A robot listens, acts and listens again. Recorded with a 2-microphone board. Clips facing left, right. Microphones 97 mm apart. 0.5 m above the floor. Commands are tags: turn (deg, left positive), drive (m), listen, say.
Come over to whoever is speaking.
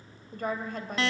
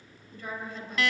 <turn deg="55"/>
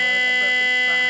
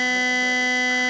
<listen/>
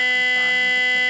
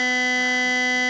<listen/>
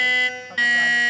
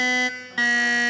<say>I heard a woman speaking, but can't make it out now. It was about straight ahead or 70° left. I did not reach it.</say>